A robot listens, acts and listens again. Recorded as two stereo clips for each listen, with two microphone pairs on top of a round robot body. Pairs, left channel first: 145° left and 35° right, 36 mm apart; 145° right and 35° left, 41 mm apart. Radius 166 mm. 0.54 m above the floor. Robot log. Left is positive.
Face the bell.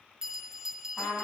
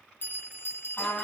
note: The bell: 110° right.
cmd yaw -110
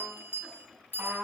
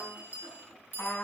note: The bell is now 10° right.
cmd yaw -10
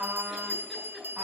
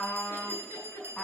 end: Facing the bell.